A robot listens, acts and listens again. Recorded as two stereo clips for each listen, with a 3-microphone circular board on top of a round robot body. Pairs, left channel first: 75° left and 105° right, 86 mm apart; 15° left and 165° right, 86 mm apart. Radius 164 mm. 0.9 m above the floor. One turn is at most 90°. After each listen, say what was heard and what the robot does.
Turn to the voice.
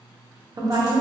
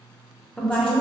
The woman speaking: 70° right. Turn 70° right.
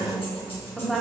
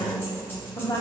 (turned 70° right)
The woman speaking is now 15° right. Turn 15° right.
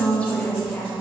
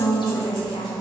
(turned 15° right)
Found it: a woman speaking, straight ahead.